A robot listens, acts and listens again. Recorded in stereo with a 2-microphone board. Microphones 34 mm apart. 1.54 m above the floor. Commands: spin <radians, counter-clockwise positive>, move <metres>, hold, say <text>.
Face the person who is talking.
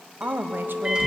spin -1.57
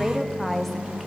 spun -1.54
say Found it: a woman speaking, straight ahead, under 1 m away.